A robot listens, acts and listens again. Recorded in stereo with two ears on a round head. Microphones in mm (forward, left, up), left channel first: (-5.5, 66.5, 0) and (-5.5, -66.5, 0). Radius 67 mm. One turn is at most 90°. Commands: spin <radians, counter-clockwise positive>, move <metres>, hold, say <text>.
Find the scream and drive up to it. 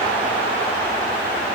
hold
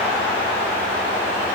hold
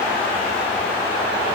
say I can't make out a scream to turn to.